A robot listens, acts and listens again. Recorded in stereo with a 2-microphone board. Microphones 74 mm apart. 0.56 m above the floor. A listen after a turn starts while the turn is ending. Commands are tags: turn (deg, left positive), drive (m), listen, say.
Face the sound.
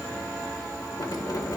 <turn deg="75"/>
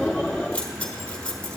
<turn deg="20"/>
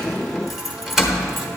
<say>Facing the keys jangling.</say>